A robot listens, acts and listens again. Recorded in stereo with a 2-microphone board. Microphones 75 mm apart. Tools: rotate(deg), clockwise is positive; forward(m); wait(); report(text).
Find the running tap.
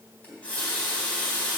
rotate(-15)
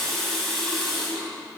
report("Facing the running tap.")